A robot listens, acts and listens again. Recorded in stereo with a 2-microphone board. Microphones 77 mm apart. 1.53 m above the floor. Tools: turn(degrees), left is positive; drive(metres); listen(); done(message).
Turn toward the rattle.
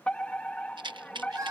turn(degrees=-70)
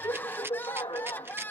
turn(degrees=-30)
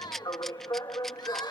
done("Found it: a rattle, straight ahead.")